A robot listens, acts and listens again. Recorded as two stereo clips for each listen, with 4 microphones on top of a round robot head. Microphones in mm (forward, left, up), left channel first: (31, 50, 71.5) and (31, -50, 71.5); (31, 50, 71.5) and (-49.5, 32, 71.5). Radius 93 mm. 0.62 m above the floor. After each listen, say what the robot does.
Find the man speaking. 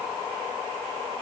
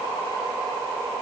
Keep listening.
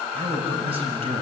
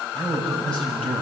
Turn 70° right.
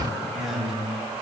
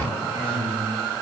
Facing the man speaking.